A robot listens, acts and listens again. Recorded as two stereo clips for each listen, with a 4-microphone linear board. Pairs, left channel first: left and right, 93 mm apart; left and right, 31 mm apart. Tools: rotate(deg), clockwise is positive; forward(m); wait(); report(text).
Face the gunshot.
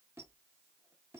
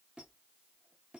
wait()
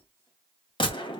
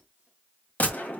rotate(-55)
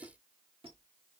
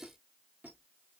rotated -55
wait()
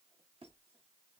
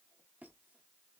report("I heard a gunshot, but can't make it out now. It was about straight ahead or 70° left.")